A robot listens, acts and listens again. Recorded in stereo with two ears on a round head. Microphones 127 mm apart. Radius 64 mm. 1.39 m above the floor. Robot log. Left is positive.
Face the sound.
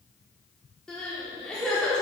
cmd yaw +30
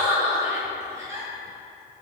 note: So it is at 25° right.
cmd yaw -25
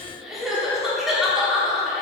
end: Facing the crying.